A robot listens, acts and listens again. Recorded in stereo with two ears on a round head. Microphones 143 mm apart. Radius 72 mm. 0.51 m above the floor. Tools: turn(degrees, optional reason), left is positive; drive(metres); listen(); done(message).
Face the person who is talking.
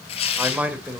turn(degrees=-30)
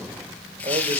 listen()
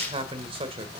turn(degrees=-140, reason="So it is at 140° right.")
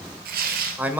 turn(degrees=-10, reason="The man speaking is now 10° right.")
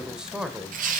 done("Facing the man speaking.")